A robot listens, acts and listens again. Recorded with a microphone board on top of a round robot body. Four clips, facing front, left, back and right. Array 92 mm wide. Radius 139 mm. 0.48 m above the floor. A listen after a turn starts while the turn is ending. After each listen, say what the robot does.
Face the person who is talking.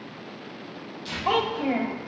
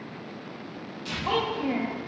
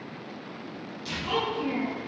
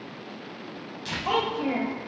Turn 20° right.
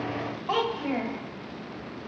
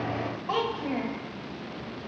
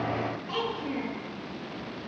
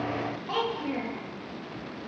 Facing the child speaking, 1 to 2 m away.